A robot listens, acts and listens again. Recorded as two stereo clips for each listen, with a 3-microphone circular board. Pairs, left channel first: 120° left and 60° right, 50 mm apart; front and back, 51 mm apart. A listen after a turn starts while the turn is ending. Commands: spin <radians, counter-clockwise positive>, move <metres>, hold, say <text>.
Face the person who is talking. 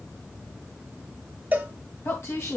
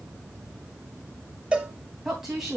spin 1.75
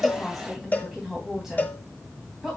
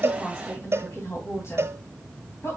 spin 0.35
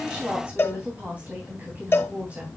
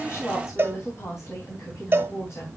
say Facing the woman speaking, 2 to 4 m away.